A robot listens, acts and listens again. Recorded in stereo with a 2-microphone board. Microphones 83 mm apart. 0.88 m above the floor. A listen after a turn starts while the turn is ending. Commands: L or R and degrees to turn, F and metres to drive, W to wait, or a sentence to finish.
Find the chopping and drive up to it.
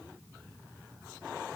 W
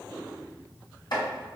L65
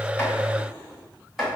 F1.0
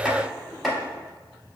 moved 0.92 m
F1.0
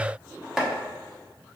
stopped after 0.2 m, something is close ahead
Arrived at the chopping, straight ahead.